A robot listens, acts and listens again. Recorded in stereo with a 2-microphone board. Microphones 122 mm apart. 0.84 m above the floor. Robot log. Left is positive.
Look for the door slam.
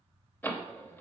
note: The door slam: about 15° left or 165° left.
cmd yaw +15
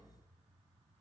cmd idle
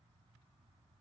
end: I heard a door slam, but can't make it out now. It was about straight ahead or 150° left.